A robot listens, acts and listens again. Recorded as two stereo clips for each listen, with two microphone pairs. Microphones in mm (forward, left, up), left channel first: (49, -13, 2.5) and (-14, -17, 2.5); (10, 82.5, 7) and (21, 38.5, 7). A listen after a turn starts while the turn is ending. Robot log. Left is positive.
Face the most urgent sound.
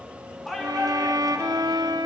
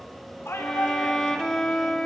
note: The shout: 90° left.
cmd yaw +90
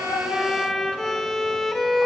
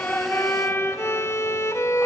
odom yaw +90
cmd idle
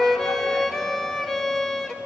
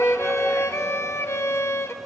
cmd idle
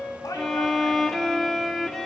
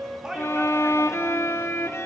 end: Found it: a shout, straight ahead, 2 to 4 m away.